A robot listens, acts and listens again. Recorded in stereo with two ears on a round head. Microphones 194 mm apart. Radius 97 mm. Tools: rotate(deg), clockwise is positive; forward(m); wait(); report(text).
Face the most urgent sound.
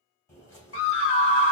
rotate(-65)
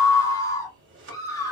rotate(-15)
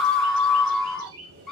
report("Found it: a scream, straight ahead.")